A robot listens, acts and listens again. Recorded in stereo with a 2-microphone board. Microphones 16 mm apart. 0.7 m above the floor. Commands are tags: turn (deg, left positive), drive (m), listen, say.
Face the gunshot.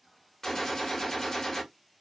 <turn deg="35"/>
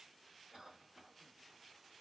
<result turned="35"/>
<listen/>
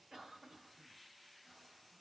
<say>I heard a gunshot, but can't make it out now. It was about straight ahead or 110° left.</say>